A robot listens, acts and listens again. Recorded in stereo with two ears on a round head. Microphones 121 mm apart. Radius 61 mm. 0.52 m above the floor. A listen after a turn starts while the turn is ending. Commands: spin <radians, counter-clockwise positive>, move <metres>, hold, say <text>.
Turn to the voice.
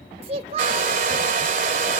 spin -0.79
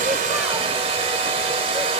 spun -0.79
hold
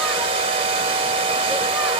hold
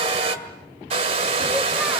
say I heard a child speaking, but can't make it out now. It was about straight ahead or 90° right.